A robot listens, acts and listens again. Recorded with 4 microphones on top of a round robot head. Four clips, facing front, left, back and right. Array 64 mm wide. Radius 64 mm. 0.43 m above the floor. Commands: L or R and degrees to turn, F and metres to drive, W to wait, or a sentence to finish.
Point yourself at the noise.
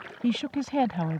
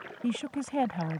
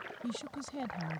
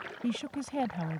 L25
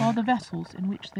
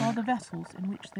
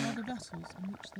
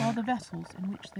L20
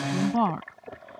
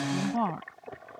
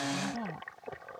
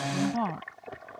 L15
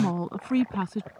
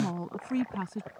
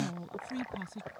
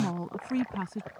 Facing the woman speaking.